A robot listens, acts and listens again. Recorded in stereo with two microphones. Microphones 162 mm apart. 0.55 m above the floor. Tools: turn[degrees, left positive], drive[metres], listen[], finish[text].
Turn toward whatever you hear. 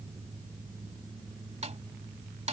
Thought: The snare drum: about 45° right or 135° right.
Action: turn[-45]
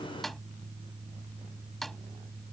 Action: finish[Found it: a snare drum, straight ahead.]